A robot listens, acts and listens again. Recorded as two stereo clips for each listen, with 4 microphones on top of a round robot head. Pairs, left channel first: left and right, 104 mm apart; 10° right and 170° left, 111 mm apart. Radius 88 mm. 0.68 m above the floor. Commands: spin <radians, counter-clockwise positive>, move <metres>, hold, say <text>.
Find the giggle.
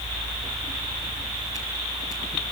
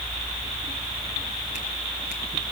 hold
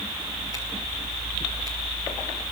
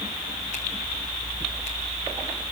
hold
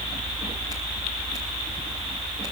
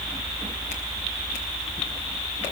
say I can't make out a giggle.